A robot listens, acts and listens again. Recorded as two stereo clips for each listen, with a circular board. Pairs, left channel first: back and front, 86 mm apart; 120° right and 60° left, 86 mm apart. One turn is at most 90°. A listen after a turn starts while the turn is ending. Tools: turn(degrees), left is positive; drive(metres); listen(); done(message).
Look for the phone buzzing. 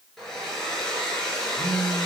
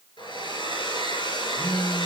turn(degrees=-40)
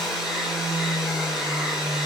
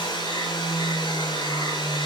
turn(degrees=-30)
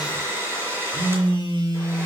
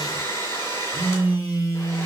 done("Facing the phone buzzing.")